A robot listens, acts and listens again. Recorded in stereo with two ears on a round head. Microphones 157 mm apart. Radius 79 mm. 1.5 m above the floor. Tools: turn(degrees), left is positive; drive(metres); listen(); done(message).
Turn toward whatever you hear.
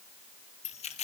turn(degrees=35)
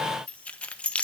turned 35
done("Found it: keys jangling, straight ahead.")